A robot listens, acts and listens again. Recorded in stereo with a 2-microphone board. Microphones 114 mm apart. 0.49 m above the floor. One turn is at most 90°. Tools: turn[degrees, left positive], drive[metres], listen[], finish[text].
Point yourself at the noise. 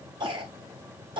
Thought: The cough: about 45° right or 135° right.
Action: turn[-45]
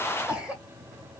Thought: So it is at 10° right.
Action: turn[-10]
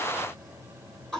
Action: finish[Found it: a cough, straight ahead, 2 to 4 m away.]